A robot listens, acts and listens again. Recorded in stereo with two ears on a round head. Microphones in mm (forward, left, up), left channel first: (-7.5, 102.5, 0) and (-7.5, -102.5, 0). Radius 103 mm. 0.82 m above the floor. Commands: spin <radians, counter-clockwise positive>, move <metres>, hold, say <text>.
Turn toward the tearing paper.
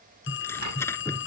spin 0.52
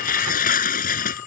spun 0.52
spin 2.44
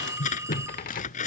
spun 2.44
spin 0.61
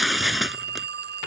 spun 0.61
say Facing the tearing paper.